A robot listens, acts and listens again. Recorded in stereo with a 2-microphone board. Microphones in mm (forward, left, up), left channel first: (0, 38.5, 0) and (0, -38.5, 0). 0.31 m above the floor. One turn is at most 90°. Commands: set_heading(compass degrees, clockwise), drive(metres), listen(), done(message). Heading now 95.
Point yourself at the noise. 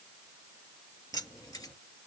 set_heading(40)
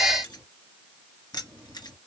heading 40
set_heading(335)
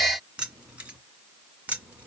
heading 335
set_heading(355)
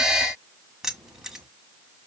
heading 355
done("Facing the keys jangling.")